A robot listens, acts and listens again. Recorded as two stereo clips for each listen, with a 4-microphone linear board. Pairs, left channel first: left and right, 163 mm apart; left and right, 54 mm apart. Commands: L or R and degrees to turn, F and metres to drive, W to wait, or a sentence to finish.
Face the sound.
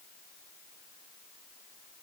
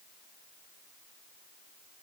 W
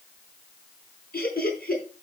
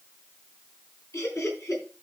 L65
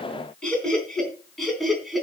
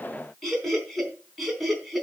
Facing the laughter.